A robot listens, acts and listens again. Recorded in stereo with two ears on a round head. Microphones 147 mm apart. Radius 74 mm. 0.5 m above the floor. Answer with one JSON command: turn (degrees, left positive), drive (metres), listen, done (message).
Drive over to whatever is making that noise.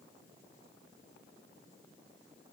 {"listen": true}
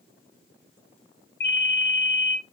{"turn": 65}
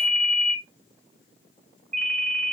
{"drive": 1.0}
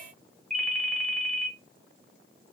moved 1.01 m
{"drive": 1.0}
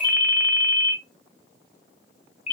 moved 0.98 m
{"drive": 1.0}
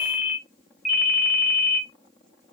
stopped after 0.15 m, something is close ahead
{"done": "I am next to the ringtone."}